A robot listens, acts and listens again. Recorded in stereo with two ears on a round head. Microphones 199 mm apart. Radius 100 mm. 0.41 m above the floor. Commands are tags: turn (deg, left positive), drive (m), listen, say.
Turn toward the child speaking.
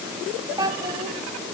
<turn deg="-15"/>
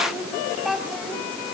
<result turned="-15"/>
<turn deg="30"/>
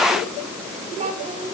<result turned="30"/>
<turn deg="-30"/>
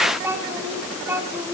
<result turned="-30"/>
<turn deg="-10"/>
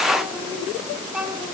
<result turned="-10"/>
<say>Found it: a child speaking, straight ahead.</say>